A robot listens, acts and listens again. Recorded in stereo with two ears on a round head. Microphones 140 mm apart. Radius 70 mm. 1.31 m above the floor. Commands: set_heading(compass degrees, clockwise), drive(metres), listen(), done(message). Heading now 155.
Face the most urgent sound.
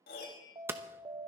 set_heading(180)
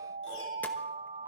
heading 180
set_heading(305)
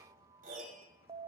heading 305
set_heading(335)
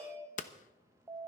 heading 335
set_heading(350)
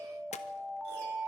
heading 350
done("Found it: an alarm, straight ahead, under 1 m away.")